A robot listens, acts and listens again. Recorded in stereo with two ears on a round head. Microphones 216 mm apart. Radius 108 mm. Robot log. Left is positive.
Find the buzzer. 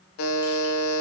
note: The buzzer: about 65° left or 115° left.
cmd yaw +65
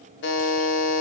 note: So it is at 45° left.
cmd yaw +45
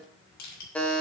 end: Found it: a buzzer, straight ahead.